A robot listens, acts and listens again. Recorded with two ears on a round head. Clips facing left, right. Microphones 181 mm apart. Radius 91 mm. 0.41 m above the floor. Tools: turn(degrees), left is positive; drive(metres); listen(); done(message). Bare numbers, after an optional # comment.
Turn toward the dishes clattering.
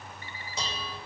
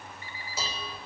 turn(-30)
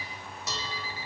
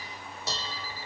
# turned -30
# So it is at 145° right.
turn(-145)
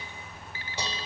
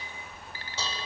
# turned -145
# The dishes clattering is now 15° left.
turn(15)
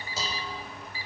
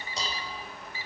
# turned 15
done("Found it: dishes clattering, straight ahead, 1 to 2 m away.")